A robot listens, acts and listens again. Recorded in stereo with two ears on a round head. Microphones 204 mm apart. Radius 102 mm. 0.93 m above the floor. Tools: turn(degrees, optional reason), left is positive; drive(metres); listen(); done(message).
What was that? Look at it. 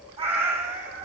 turn(degrees=-35, reason="The cat meowing: about 35° right or 145° right.")
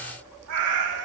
turn(degrees=-110, reason="So it is at 110° right.")
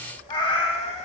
turn(degrees=30, reason="The cat meowing is now 30° left.")
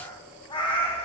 turn(degrees=25, reason="The cat meowing is now 25° left.")
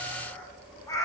turn(degrees=15, reason="The cat meowing is now 15° left.")
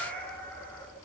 turn(degrees=10, reason="The cat meowing is now 10° left.")
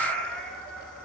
done("Found it: a cat meowing, straight ahead.")